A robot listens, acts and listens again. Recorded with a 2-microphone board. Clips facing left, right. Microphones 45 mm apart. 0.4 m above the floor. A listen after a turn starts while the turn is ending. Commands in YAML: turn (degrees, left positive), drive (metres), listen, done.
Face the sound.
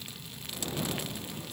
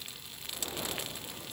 listen: true
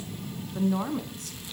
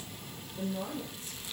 turn: 70
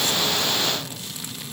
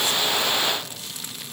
listen: true
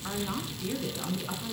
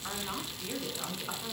done: "Facing the woman speaking, over 4 m away."